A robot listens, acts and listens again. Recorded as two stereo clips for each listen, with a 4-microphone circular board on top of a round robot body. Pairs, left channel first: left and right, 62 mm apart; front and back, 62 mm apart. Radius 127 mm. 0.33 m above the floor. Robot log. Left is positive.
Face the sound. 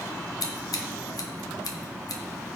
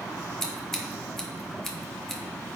note: The scissors: 85° left.
cmd yaw +85
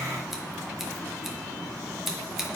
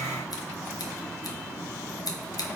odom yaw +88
end: Facing the scissors, 1 to 2 m away.